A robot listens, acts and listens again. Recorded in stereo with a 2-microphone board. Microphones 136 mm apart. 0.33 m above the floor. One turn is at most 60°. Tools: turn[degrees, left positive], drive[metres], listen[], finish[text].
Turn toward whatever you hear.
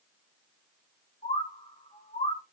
Thought: The bird: about 70° left or 110° left.
Action: turn[60]
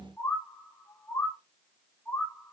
Thought: So it is at 15° left.
Action: turn[15]
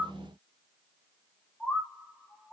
Action: finish[Facing the bird.]